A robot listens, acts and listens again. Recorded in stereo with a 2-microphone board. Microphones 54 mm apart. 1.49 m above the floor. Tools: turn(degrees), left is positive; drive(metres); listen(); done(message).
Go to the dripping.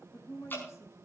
turn(degrees=45)
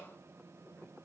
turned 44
listen()
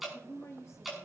drive(metres=1.0)
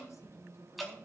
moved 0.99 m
drive(metres=1.0)
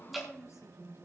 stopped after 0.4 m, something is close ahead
done("Blocked. The dripping is further on, straight ahead.")